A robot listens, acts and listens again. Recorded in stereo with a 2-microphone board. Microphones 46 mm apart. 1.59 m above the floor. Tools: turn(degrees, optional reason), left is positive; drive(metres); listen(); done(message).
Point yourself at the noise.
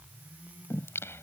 turn(degrees=70, reason="The singing: about 70° left or 110° left.")
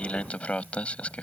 turn(degrees=30, reason="So it is at 30° left.")
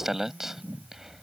turn(degrees=-10, reason="The singing is now 10° right.")
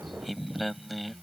done("Found it: singing, straight ahead.")